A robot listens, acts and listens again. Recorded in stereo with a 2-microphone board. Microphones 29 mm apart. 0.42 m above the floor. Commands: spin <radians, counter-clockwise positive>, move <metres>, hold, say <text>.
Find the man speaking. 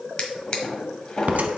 hold
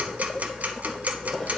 hold
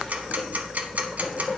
say I can't make out a man speaking to turn to.